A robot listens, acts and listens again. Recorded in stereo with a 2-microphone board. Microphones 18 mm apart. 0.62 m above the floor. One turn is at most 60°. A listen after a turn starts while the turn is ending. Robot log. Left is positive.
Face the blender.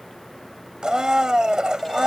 note: The blender: about 55° right or 125° right.
cmd yaw -55
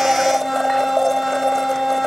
end: Found it: a blender, straight ahead.